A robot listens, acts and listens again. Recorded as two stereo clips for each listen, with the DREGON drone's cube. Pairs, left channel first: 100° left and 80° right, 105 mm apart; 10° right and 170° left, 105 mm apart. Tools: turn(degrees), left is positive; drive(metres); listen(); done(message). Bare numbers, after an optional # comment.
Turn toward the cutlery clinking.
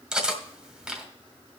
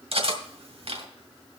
# The cutlery clinking: 165° right.
turn(-165)
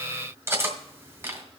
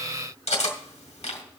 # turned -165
# The cutlery clinking is now 15° right.
turn(-15)
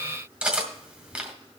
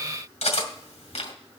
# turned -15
done("Facing the cutlery clinking, 1 to 2 m away.")